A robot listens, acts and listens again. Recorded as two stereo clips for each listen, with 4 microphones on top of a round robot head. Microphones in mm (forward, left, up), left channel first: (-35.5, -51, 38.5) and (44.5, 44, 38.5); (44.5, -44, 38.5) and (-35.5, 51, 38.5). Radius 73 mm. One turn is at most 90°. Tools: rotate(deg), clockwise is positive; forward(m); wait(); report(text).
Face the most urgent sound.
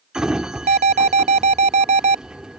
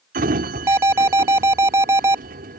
rotate(-65)
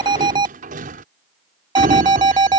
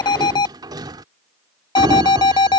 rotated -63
report("Facing the alarm.")